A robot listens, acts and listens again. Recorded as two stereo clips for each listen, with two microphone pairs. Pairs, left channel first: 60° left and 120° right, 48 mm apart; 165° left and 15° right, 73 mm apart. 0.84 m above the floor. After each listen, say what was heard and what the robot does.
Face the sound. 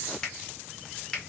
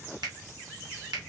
The finger snap: 20° right. Turn 20° right.
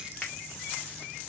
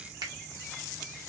The finger snap is now 10° right. Turn 10° right.
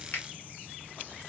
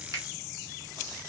Found it: a finger snap, straight ahead.